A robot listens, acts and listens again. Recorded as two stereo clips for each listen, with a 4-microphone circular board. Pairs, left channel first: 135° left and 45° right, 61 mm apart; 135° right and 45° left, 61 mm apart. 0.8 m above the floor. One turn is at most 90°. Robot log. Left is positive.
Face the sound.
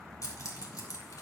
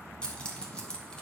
note: The keys jangling: 150° left.
cmd yaw +90
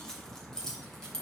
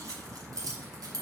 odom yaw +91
note: The keys jangling is now 55° left.
cmd yaw +55
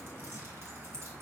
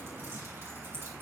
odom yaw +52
cmd idle
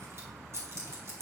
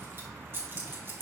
end: Found it: keys jangling, straight ahead, over 4 m away.